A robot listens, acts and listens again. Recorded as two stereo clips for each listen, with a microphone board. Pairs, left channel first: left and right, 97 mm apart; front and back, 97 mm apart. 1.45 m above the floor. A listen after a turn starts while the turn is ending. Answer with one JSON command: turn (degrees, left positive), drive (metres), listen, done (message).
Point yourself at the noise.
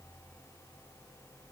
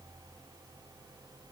{"listen": true}
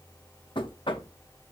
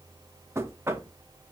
{"turn": 115}
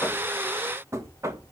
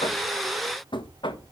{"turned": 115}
{"turn": -30}
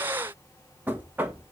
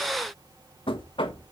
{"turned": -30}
{"turn": -20}
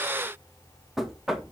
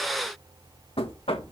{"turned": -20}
{"done": "Facing the knocking, 1 to 2 m away."}